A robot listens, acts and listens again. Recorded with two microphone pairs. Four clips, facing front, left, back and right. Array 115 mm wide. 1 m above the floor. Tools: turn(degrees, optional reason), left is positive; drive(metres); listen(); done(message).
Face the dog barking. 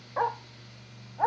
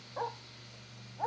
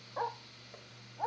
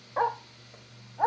turn(degrees=-50, reason="The dog barking: 50° right.")
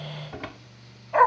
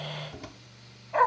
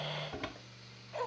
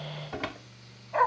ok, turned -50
done("Facing the dog barking.")